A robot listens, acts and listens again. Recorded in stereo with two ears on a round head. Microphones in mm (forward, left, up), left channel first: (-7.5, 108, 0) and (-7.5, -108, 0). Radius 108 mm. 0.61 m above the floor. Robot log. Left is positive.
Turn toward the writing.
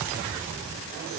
cmd idle
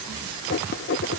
note: The writing: about 50° left or 130° left.
cmd yaw +50
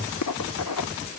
note: So it is at 80° left.
cmd yaw +80
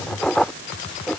end: Facing the writing.